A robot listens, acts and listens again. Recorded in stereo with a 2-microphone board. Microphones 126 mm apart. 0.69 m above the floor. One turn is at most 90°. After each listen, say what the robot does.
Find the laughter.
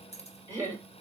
Turn 25° right.
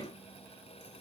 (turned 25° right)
Keep listening.
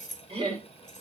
Turn 90° right.
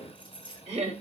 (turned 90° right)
Turn 70° right.
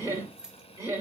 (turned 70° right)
Turn 25° right.
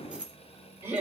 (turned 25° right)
Turn 20° right.
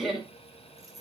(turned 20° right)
Facing the laughter, 2 to 4 m away.